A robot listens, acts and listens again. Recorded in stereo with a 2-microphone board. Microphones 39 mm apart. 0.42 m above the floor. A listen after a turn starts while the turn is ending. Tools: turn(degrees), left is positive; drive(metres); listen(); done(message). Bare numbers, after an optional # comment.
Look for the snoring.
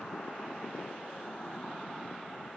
listen()
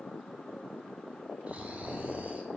# The snoring: about 40° right or 140° right.
turn(-40)
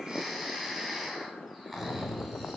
done("Found it: snoring, straight ahead, 1 to 2 m away.")